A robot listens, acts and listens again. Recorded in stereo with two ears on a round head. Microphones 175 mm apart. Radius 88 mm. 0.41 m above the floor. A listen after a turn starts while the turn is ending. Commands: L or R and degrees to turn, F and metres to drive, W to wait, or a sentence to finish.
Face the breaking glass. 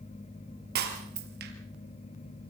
R55
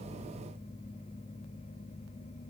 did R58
W
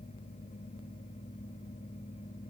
I heard breaking glass, but can't make it out now. It was about 5° left or 65° right.